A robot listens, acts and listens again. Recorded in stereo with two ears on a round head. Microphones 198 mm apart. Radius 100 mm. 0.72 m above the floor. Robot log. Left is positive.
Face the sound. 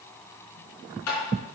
cmd yaw +90
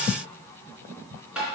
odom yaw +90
end: Found it: tapping, straight ahead.